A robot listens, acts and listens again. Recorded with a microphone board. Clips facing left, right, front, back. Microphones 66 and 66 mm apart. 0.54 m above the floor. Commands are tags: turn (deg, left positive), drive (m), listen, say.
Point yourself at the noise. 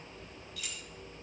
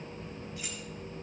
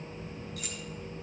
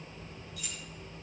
<turn deg="-30"/>
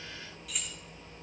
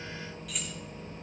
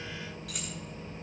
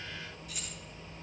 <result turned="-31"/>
<say>Facing the keys jangling.</say>